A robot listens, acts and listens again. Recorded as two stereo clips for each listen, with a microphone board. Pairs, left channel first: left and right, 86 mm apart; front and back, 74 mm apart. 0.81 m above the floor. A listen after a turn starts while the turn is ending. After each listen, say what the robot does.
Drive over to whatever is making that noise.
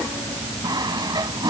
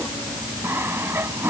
Turn 125° right.
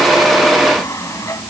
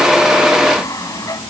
Turn 40° left.
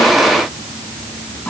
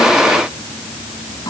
Keep listening.
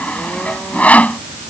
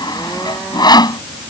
Turn 15° left.
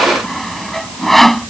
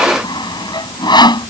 Drive 1.0 m forward.
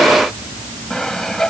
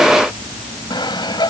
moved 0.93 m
Drive 1.0 m forward.
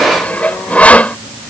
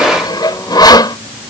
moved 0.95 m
Turn 15° left.
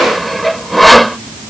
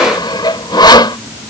Drive 1.0 m forward.
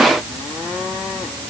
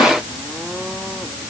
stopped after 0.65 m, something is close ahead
Keep listening.
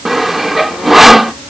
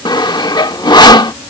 I am next to the sawing.